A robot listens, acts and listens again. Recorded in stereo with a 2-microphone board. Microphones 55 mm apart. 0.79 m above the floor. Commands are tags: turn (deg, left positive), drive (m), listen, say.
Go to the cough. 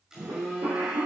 <turn deg="-70"/>
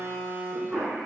<drive m="1.0"/>
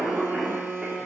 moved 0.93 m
<turn deg="-10"/>
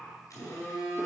<listen/>
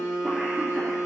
<listen/>
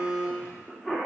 <drive m="1.0"/>
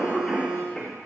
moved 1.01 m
<turn deg="10"/>
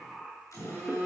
<listen/>
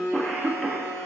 <drive m="1.0"/>
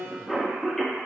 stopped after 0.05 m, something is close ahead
<say>Arrived at the cough, straight ahead.</say>